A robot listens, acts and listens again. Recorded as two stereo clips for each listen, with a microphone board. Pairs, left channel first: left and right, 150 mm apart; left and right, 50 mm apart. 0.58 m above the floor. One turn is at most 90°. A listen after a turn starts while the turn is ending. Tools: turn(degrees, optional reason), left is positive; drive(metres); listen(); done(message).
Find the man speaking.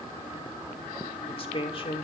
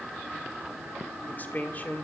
turn(degrees=35, reason="The man speaking: about 35° left or 145° left.")
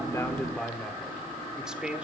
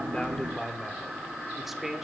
done("Found it: a man speaking, straight ahead, 1 to 2 m away.")